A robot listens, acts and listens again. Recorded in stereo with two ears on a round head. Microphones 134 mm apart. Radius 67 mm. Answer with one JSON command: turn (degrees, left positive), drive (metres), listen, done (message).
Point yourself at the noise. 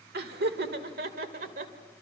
{"turn": -60}
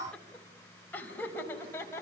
{"turn": 15}
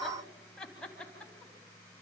{"done": "Facing the laughter, over 4 m away."}